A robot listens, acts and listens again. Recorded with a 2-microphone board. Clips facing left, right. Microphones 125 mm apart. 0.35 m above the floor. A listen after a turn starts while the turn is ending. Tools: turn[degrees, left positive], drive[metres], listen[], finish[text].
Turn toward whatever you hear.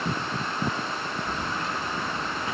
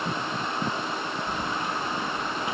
Action: turn[-30]
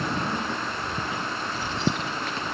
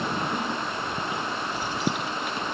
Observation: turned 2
Action: turn[-30]
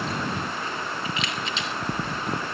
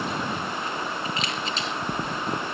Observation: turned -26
Thought: So it is at 140° right.
Action: turn[-140]
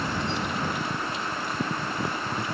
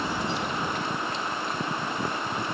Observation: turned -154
Thought: The keys jangling is now 10° left.
Action: turn[10]
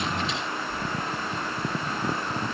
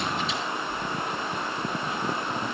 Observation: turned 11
Action: finish[Found it: keys jangling, straight ahead.]